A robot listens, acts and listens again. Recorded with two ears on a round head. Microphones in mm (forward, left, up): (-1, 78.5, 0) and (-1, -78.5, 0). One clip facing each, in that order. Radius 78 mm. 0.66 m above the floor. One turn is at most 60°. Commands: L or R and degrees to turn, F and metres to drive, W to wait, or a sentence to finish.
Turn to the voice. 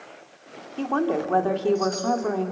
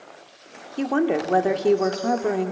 R20
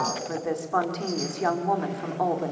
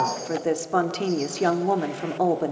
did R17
R60
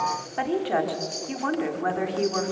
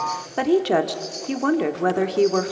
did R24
R60
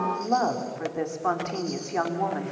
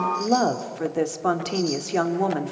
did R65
R50
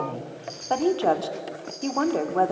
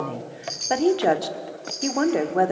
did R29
R20
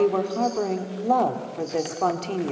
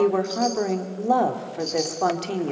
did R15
Found it: a woman speaking, straight ahead, 1 to 2 m away.